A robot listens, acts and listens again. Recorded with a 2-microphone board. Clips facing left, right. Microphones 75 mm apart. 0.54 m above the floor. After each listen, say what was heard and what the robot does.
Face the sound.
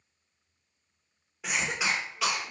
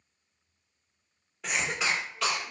Turn 30° left.
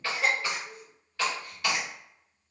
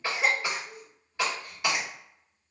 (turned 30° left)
So it is at 20° right. Turn 20° right.
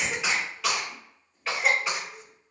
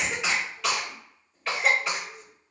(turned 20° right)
Facing the cough, 1 to 2 m away.